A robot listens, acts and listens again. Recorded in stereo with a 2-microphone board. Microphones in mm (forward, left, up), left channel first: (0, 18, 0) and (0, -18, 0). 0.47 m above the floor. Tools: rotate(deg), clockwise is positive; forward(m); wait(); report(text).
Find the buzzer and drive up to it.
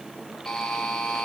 rotate(-15)
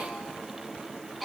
forward(1.0)
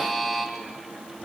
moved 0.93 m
forward(1.0)
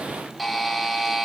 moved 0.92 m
forward(1.0)
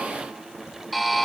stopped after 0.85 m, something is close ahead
report("I am next to the buzzer.")